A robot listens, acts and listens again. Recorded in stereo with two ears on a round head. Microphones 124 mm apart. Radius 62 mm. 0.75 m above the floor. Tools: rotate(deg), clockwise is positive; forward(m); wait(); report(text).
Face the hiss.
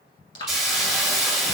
rotate(-30)
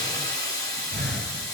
rotate(-150)
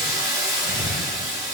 rotate(25)
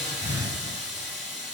report("Found it: a hiss, straight ahead, 1 to 2 m away.")